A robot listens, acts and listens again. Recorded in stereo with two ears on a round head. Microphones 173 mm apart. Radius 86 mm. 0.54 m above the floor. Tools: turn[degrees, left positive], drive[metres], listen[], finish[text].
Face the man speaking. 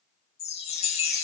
Action: listen[]
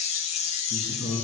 Thought: The man speaking: about 70° left or 110° left.
Action: turn[70]
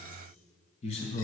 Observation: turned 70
Thought: So it is at 35° left.
Action: turn[35]
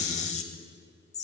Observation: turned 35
Action: listen[]
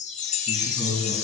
Action: finish[Found it: a man speaking, straight ahead.]